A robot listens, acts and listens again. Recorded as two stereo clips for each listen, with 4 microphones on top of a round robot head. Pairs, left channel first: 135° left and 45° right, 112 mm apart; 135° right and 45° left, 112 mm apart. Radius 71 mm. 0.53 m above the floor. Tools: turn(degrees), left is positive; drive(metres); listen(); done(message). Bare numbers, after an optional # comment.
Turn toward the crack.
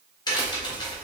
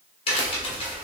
# The crack: 170° right.
turn(-170)
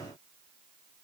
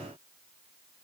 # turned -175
done("I heard a crack from this way, but can't make it out now.")